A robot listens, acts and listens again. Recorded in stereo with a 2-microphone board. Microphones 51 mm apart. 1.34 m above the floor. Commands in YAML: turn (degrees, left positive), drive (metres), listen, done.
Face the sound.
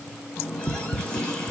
turn: 20
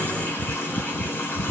turn: 145
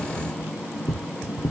turn: -15
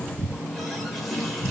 done: "Facing the running tap."